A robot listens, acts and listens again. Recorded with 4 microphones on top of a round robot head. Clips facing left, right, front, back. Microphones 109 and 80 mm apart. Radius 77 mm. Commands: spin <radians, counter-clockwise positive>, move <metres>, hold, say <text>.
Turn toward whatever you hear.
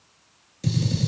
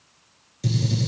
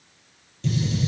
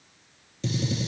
spin -3.05
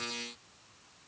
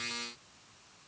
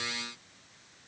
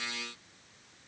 say I heard a gunshot from this way, but can't make it out now.